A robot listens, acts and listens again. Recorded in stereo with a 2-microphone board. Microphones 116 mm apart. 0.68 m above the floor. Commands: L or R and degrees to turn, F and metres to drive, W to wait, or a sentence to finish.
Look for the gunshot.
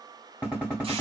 R30
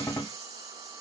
L15
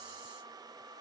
Facing where the gunshot came from. I can't hear it now.